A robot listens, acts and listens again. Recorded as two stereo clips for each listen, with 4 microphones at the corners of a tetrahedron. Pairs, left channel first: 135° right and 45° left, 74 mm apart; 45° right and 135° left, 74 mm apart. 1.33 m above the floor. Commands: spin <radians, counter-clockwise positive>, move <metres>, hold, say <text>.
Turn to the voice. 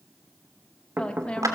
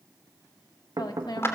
spin -1.05
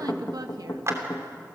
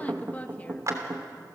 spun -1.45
spin 0.44
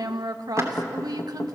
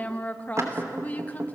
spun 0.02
spin 0.35
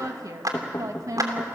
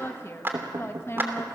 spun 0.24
spin 0.17
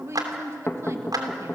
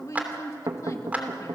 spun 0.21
say Found it: a woman speaking, straight ahead.